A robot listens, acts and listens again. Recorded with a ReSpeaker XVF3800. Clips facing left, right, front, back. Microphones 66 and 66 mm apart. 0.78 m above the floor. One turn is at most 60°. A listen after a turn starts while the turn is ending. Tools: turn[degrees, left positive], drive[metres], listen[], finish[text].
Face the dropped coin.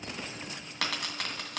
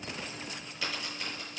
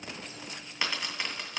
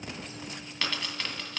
Thought: The dropped coin: 75° left.
Action: turn[60]
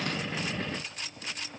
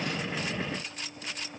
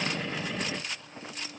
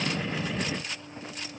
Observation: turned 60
Thought: Nothing new. It was at 15° left.
Action: turn[15]
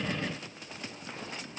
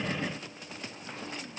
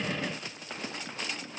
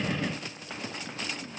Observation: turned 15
Action: finish[I heard a dropped coin from this way, but can't make it out now.]